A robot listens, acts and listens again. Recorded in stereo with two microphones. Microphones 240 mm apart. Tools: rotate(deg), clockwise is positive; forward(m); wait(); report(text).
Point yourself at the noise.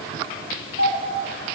rotate(-70)
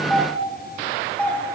report("Facing the doorbell, over 4 m away.")